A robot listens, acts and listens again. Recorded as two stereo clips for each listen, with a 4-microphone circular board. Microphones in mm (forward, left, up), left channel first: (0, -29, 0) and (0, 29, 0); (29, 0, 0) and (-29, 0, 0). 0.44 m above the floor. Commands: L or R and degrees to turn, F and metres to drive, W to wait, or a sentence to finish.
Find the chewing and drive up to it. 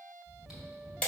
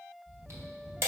L170
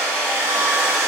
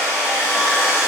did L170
W
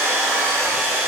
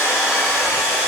W
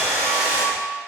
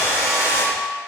I heard chewing from this way, but can't make it out now. I did not reach it.